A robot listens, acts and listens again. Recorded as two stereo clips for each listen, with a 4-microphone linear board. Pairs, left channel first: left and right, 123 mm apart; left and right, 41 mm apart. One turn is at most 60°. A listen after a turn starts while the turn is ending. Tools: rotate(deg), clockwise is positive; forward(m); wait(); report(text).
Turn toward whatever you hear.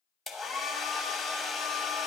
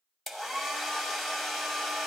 rotate(-30)
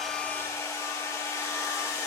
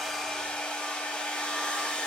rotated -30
rotate(-60)
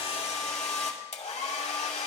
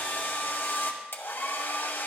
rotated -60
rotate(-60)
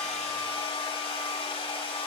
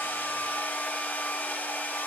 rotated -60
rotate(-60)
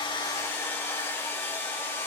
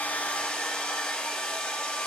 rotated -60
rotate(-20)
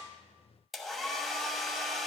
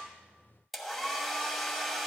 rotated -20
report("Facing the hair dryer, 1 to 2 m away.")